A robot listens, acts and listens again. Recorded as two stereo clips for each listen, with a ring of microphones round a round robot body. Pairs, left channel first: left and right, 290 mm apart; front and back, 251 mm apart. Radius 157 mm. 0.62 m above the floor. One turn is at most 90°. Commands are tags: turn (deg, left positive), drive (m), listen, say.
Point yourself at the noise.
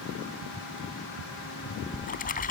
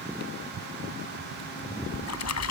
<turn deg="25"/>
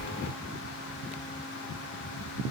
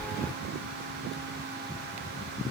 <say>Found it: a splash, straight ahead.</say>